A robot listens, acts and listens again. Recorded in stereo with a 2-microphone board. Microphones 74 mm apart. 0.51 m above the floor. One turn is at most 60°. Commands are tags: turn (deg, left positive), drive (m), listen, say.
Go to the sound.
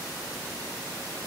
<listen/>
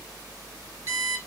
<turn deg="-50"/>
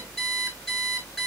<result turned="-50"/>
<drive m="1.0"/>
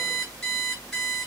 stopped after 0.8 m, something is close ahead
<say>Something is in my way. I am facing the alarm clock but have not reached it.</say>